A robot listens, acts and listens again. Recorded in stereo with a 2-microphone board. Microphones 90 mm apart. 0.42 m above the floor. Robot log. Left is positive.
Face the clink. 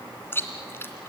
cmd idle
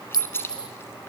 note: The clink: about 55° left or 125° left.
cmd yaw +55
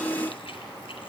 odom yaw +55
cmd idle
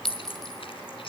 end: Facing the clink.